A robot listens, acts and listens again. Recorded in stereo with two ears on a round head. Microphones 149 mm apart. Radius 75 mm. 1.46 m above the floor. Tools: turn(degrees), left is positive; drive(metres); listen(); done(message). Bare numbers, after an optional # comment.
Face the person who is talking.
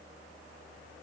listen()
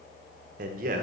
# The man speaking: about 55° right or 125° right.
turn(-55)
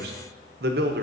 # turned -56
# So it is at 70° right.
turn(-70)
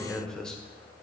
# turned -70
done("Facing the man speaking, 1 to 2 m away.")